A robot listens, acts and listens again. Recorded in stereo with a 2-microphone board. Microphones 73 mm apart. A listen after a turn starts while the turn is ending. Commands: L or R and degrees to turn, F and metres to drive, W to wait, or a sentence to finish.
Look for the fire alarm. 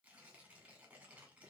W
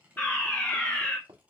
L25
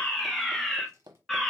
Facing the fire alarm.